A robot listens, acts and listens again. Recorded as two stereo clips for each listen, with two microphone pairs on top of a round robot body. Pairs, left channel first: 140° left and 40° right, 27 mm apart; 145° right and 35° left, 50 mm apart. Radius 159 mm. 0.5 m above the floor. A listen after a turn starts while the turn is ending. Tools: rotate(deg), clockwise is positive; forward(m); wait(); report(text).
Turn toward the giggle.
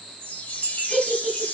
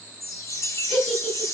rotate(90)
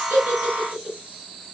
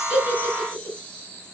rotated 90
report("Facing the giggle, over 4 m away.")